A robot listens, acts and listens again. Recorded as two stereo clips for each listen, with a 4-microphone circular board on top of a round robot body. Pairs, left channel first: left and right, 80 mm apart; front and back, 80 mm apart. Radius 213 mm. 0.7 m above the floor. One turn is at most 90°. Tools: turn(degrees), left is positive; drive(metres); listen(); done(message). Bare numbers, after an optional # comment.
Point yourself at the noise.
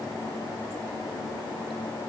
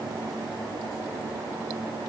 listen()
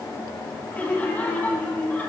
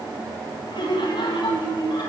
# The laughter: 20° left.
turn(20)
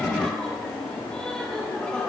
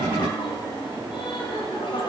# The laughter is now 10° left.
turn(10)
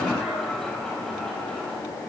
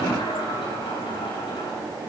done("Facing the laughter, over 4 m away.")